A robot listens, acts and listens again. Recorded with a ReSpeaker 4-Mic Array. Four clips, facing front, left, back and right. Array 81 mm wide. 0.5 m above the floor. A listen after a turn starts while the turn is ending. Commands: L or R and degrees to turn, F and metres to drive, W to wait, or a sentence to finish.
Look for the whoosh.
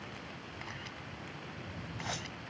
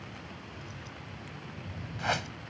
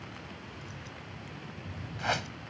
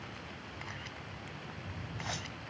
L130
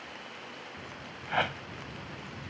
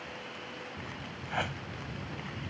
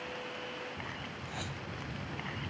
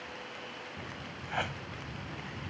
Facing the whoosh.